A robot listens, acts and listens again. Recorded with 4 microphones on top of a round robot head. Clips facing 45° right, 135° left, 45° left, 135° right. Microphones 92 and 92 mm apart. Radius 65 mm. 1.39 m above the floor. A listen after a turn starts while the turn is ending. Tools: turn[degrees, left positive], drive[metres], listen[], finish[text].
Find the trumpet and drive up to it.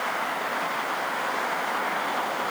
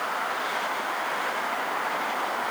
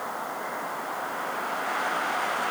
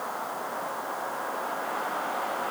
Action: listen[]
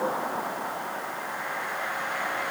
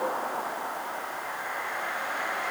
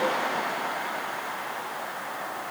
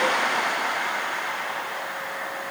Action: listen[]
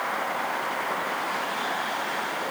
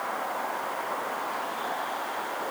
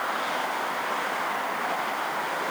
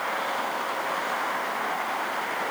Action: finish[I can't make out a trumpet to turn to.]